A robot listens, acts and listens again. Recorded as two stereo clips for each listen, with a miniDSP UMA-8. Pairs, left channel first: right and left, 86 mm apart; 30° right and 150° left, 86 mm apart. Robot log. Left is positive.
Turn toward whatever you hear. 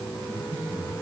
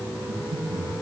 note: The breathing: 150° left.
cmd yaw +150
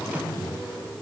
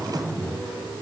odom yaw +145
end: Found it: breathing, straight ahead, over 4 m away.